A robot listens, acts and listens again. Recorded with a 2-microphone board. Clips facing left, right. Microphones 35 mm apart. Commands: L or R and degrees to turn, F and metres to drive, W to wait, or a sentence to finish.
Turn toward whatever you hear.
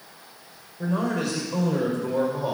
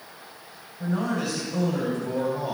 L90
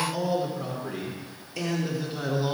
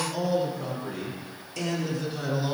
L15
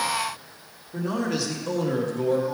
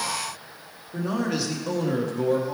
Found it: a man speaking, straight ahead.